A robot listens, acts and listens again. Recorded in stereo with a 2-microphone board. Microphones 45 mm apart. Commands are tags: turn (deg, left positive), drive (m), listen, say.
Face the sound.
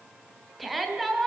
<turn deg="30"/>
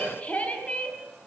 <turn deg="145"/>
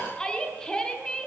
<turn deg="15"/>
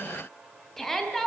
<say>Facing the shout.</say>